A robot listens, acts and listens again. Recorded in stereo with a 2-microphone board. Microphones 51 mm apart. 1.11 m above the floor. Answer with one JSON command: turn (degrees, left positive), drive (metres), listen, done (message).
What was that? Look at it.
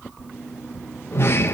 {"turn": 50}
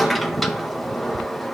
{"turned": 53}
{"done": "Facing the sliding door, under 1 m away."}